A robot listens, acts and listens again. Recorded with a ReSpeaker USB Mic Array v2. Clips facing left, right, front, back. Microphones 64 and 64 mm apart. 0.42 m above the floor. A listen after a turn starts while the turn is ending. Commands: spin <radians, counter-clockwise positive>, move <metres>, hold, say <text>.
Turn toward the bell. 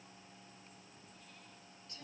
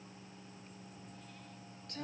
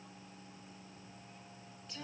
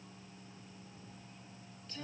hold
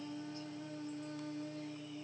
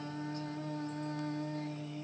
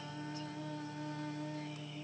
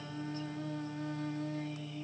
hold
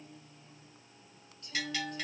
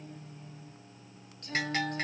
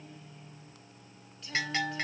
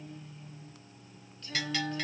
spin -0.96
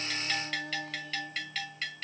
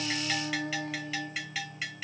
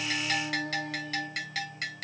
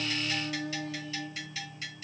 spin -0.17
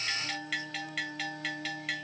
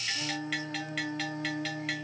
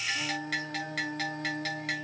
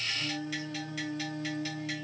say Facing the bell.